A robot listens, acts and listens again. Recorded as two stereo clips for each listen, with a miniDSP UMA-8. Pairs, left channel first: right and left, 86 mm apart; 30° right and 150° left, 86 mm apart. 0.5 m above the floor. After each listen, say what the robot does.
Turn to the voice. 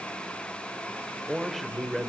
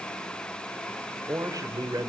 Turn 180° left.
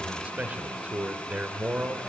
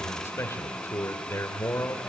Turn 20° left.
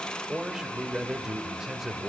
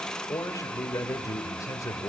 Facing the man speaking.